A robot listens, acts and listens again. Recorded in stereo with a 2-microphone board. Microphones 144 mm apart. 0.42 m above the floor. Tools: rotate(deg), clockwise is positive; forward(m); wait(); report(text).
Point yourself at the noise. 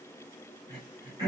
rotate(30)
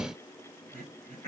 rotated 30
rotate(120)
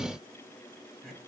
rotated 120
report("Found it: throat clearing, straight ahead, 2 to 4 m away.")